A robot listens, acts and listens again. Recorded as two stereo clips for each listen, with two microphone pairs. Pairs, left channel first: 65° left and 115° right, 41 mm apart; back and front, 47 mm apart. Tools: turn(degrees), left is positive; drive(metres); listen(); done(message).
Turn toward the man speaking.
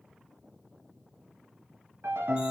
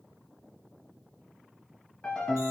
listen()
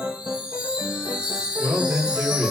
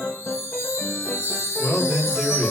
turn(degrees=-90)
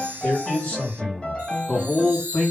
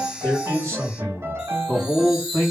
done("Found it: a man speaking, straight ahead.")